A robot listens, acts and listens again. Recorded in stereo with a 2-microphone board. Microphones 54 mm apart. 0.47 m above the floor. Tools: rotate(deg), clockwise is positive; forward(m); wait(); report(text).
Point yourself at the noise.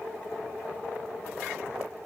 wait()
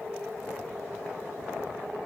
wait()
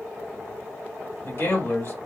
rotate(-45)
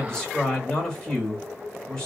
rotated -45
rotate(-20)
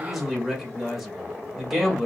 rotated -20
report("Found it: a man speaking, straight ahead, 1 to 2 m away.")